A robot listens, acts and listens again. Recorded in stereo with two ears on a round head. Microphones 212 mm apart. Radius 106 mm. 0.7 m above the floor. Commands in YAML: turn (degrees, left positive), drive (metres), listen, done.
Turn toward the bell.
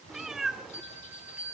turn: -30
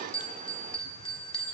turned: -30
turn: 25
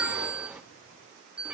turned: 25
done: "Facing the bell."